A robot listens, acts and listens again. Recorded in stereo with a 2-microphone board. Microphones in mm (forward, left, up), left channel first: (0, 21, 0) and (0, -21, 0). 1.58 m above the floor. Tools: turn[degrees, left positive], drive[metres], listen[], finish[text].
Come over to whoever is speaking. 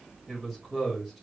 Action: turn[-30]
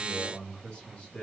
Thought: So it is at 25° left.
Action: turn[25]
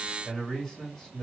Action: drive[1.0]
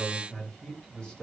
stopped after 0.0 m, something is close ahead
Thought: The man speaking is now 15° left.
Action: turn[15]
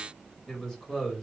Action: finish[Something is in my way. I am facing the man speaking but have not reached it.]